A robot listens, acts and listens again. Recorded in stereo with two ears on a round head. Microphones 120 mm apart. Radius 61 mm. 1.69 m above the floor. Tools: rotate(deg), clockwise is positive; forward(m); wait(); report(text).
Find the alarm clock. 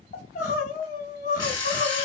rotate(-25)
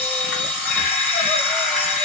report("Facing the alarm clock, 1 to 2 m away.")